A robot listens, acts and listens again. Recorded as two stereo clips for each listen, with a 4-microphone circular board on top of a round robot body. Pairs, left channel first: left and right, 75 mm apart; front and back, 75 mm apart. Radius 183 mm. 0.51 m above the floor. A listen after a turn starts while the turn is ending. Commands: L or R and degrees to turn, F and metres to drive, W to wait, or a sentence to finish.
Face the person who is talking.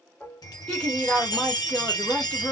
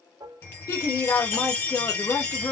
L15
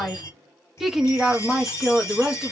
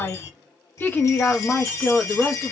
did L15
R115
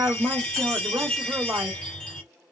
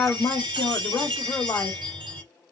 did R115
R45
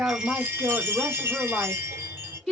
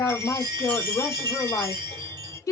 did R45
Found it: a woman speaking, straight ahead.